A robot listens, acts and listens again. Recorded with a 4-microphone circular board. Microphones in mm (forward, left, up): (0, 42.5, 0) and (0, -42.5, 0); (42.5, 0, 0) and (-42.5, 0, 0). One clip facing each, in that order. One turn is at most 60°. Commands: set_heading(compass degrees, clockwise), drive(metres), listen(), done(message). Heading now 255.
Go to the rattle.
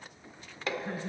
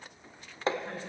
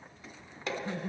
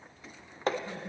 listen()
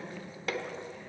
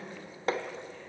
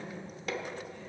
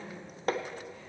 listen()
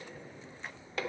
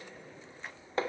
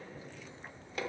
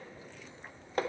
done("I can't make out a rattle, only laughter and hammering.")